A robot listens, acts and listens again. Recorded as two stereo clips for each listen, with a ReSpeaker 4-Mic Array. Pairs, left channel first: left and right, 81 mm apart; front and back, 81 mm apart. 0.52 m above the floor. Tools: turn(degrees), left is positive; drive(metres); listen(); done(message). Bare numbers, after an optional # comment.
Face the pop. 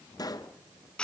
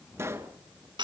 # The pop: 125° left.
turn(125)
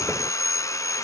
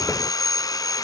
done("I heard a pop from this way, but can't make it out now.")